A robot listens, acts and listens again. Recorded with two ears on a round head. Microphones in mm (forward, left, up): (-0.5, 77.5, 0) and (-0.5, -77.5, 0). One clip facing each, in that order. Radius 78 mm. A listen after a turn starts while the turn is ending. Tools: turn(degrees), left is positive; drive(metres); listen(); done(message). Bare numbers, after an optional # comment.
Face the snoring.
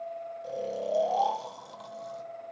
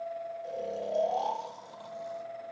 # The snoring: about 70° left or 110° left.
turn(70)
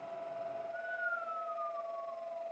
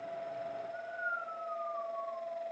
# So it is at 20° left.
turn(20)
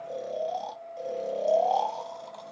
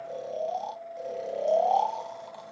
done("Found it: snoring, straight ahead, 2 to 4 m away.")